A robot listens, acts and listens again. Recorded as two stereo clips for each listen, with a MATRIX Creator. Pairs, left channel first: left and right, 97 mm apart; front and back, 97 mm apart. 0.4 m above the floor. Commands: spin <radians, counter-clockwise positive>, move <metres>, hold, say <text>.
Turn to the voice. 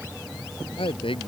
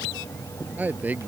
spin 1.83
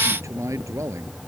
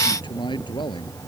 spin -0.61
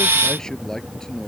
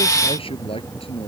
say Facing the man speaking.